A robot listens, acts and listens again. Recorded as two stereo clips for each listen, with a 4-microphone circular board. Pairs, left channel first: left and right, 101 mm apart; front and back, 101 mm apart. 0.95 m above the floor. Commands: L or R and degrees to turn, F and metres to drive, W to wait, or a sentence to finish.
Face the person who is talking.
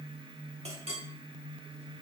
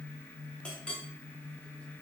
W
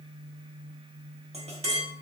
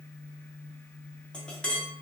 W
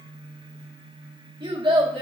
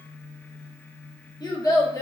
R55
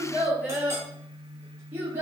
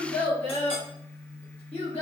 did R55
R20
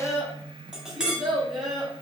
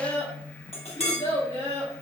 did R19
Facing the child speaking.